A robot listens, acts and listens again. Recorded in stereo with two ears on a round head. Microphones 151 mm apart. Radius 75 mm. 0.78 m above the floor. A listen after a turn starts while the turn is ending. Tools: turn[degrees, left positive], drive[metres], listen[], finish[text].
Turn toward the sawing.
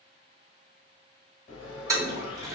Action: turn[90]
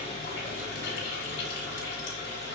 Action: listen[]
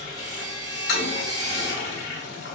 Action: finish[Found it: sawing, straight ahead.]